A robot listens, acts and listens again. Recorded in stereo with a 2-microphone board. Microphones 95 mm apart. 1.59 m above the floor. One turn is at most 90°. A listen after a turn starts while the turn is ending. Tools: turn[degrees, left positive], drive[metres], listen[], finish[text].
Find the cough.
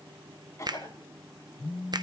Thought: The cough: about 35° left or 145° left.
Action: turn[35]
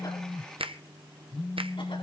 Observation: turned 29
Action: listen[]
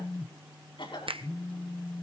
Thought: So it is at 120° left.
Action: turn[90]
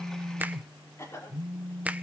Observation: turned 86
Thought: The cough is now 30° left.
Action: turn[30]
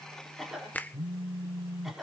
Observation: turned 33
Action: finish[Found it: a cough, straight ahead, over 4 m away.]